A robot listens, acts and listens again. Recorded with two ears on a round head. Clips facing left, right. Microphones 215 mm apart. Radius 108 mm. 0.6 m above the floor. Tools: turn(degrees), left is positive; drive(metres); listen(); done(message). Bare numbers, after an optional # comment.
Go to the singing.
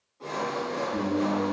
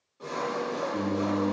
# The singing: about 15° left or 165° left.
turn(15)
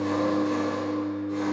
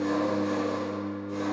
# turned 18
drive(1.0)
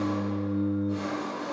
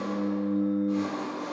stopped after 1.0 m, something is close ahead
done("Arrived at the singing, straight ahead.")